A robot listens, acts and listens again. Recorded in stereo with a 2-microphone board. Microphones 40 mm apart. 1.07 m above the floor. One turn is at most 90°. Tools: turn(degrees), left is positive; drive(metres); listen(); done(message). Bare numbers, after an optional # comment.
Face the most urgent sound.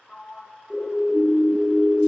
turn(-30)
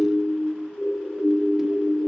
# So it is at 20° left.
turn(20)
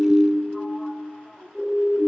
done("Found it: a siren, straight ahead, 2 to 4 m away.")